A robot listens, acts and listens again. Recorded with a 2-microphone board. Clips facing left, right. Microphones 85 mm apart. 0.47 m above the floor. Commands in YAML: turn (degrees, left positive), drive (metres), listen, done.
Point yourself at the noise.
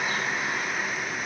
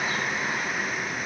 listen: true
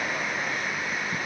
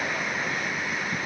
listen: true
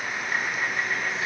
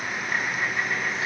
done: "I can't make out anything to turn to."